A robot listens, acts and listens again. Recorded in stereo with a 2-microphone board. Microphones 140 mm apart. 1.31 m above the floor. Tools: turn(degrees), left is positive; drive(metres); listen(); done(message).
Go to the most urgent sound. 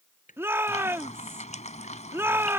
turn(degrees=-15)
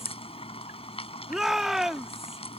drive(metres=1.0)
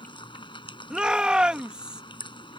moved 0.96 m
drive(metres=1.0)
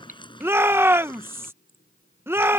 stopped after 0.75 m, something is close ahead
turn(degrees=-15)
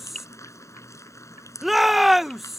done("Arrived at the shout, straight ahead.")